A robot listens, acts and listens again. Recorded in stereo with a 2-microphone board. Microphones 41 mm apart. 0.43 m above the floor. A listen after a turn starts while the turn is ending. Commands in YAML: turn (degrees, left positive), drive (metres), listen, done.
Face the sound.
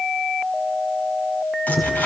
turn: 55
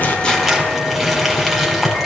done: "Found it: crumpling, straight ahead, 2 to 4 m away."